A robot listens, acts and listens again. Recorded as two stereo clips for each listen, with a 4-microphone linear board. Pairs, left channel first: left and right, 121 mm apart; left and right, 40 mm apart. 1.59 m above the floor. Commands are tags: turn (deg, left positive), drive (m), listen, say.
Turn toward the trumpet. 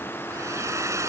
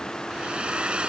<listen/>
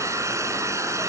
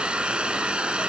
<listen/>
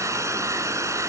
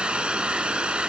<say>I can't make out a trumpet to turn to.</say>